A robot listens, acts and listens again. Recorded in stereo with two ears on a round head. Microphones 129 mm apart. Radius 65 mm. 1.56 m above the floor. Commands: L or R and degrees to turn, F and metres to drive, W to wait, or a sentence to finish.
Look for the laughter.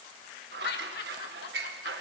L90
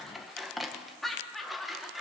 Facing the laughter.